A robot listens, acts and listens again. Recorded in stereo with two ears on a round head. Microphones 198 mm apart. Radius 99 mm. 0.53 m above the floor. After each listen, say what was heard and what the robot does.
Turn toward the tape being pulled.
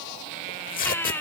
The tape being pulled: about 40° left or 140° left. Turn 40° left.
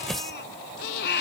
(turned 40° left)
Facing the tape being pulled.